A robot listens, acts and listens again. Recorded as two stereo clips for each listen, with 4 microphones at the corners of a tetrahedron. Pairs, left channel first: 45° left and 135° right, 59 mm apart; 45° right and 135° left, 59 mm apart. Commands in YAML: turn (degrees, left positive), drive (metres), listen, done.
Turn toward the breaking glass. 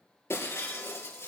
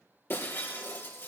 done: "Found it: breaking glass, straight ahead."